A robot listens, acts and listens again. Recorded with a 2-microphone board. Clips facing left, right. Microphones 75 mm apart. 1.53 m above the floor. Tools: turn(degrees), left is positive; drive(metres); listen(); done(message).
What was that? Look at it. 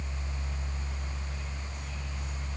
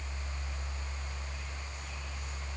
listen()
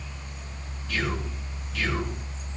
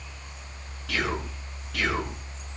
turn(degrees=-90)
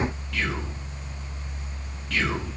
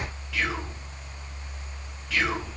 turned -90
done("Found it: whispering, straight ahead.")